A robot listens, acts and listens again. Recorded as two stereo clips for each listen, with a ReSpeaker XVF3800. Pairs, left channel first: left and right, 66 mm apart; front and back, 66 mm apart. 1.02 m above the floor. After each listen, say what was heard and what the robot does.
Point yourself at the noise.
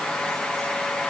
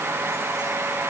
Keep listening.
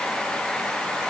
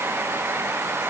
Keep listening.
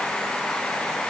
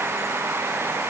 I can't make out anything to turn to.